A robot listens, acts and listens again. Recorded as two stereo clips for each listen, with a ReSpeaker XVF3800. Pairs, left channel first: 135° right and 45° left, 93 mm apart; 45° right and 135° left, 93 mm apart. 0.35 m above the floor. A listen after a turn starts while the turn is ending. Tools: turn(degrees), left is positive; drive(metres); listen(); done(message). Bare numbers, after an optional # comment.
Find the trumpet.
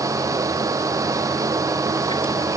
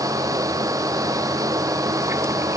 listen()
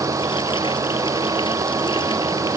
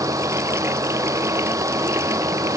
listen()
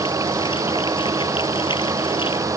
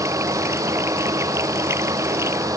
done("I can't make out a trumpet to turn to.")